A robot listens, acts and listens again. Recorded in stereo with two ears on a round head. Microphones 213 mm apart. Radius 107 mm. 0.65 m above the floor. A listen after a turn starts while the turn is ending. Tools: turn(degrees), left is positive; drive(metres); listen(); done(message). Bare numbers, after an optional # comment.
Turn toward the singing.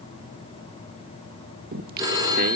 # The singing: about 45° right or 135° right.
turn(-45)
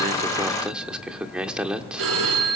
done("Facing the singing, 1 to 2 m away.")